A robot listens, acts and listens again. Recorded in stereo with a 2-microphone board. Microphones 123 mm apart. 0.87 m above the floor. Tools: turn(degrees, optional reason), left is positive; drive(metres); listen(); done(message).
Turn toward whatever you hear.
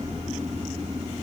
listen()
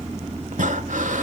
turn(degrees=-90)
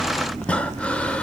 turn(degrees=10, reason="So it is at 10° left.")
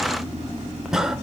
done("Facing the breathing, 1 to 2 m away.")